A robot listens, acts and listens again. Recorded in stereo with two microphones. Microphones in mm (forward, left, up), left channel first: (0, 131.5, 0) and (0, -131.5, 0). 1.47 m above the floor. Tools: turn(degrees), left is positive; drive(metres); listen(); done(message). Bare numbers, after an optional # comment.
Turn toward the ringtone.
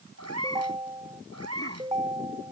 # The ringtone: about 20° right or 160° right.
turn(-20)
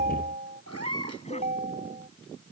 # So it is at 140° right.
turn(-140)
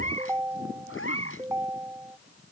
# The ringtone is now 10° right.
turn(-10)
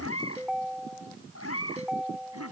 done("Facing the ringtone.")